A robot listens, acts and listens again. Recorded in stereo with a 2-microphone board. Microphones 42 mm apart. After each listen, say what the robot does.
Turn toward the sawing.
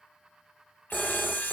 Turn 55° left.
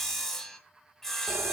Turn 10° left.
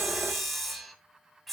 Found it: sawing, straight ahead, 2 to 4 m away.